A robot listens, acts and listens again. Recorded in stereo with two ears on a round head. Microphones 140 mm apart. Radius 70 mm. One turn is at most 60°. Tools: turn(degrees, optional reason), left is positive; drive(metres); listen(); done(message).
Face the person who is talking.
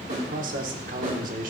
turn(degrees=-60, reason="The man speaking: about 60° right or 120° right.")
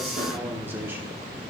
turn(degrees=-15, reason="So it is at 15° right.")
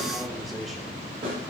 done("Facing the man speaking, 1 to 2 m away.")